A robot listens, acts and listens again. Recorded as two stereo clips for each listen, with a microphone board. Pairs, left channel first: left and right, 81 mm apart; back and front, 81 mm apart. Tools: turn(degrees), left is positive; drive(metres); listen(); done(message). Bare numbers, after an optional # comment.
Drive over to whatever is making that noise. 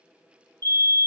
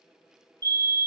# The fire alarm: 30° left.
turn(30)
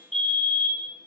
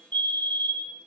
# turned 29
drive(1.0)
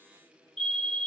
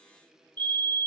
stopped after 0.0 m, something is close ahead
done("Something is in my way. I am facing the fire alarm but have not reached it.")